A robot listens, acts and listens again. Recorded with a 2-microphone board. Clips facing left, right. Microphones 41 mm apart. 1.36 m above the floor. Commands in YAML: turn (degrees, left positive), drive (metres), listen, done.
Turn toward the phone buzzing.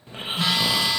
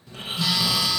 turn: 40
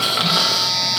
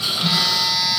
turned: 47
done: "Found it: a phone buzzing, straight ahead, 1 to 2 m away."